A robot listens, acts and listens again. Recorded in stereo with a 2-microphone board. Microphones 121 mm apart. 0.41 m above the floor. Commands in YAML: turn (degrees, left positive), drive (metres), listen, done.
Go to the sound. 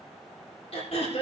turn: 55
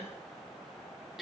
drive: 1.0
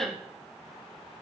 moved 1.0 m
drive: 1.0
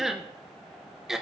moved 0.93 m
drive: 1.0
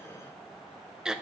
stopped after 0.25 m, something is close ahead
done: "Arrived at the throat clearing, straight ahead."